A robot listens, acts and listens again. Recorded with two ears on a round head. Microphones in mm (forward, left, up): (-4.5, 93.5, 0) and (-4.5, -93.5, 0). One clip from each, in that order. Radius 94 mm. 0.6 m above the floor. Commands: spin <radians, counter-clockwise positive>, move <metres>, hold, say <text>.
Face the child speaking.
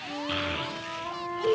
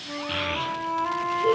spin -0.52
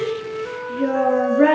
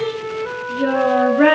spin -2.44
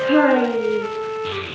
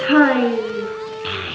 spin -0.70
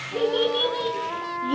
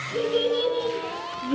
spin 0.26
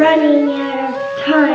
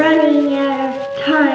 say Facing the child speaking, over 4 m away.